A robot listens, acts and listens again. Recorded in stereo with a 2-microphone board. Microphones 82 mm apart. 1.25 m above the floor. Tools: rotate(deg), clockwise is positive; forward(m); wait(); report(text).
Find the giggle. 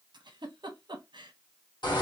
rotate(70)
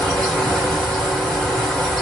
wait()
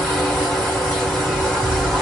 wait()
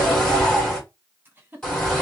rotate(25)
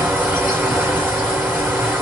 wait()
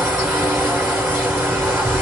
wait()
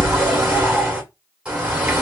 report("I heard a giggle from this way, but can't make it out now.")